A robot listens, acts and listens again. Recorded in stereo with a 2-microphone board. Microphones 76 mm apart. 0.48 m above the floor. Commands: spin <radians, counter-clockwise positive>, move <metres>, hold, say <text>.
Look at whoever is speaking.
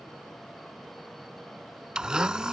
hold
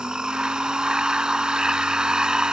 hold
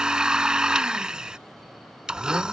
say I can't make out anyone speaking, only a blender.